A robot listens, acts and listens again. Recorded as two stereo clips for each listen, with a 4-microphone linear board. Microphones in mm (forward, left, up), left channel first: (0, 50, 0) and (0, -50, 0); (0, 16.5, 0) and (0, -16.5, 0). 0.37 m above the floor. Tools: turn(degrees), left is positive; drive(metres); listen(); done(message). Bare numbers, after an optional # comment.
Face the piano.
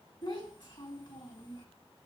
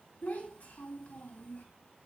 listen()
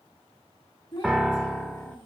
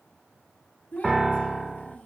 turn(30)
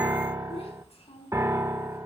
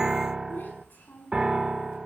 # So it is at 30° right.
turn(-30)
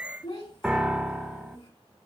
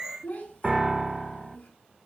done("Facing the piano, 1 to 2 m away.")